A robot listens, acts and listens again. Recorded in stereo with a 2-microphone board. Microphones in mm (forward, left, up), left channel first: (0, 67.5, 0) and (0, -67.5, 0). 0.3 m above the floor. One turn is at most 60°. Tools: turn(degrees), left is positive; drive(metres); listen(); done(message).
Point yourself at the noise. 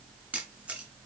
turn(degrees=-30)
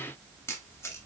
turn(degrees=20)
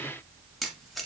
done("Found it: a camera shutter, straight ahead, 1 to 2 m away.")